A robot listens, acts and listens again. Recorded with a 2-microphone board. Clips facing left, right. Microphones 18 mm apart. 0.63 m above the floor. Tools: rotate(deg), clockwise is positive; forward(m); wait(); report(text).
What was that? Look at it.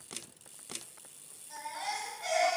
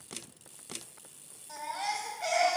rotate(65)
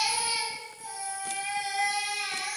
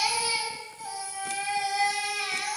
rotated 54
rotate(60)
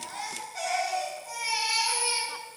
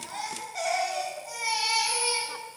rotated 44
rotate(20)
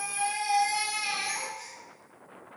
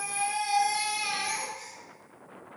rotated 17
report("Found it: a baby crying, straight ahead.")